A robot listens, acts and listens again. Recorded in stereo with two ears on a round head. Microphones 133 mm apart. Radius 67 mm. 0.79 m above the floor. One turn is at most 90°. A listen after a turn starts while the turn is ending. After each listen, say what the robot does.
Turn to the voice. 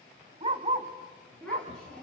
Turn 30° left.
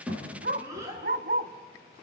Turn 20° right.
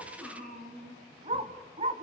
Facing the child speaking, over 4 m away.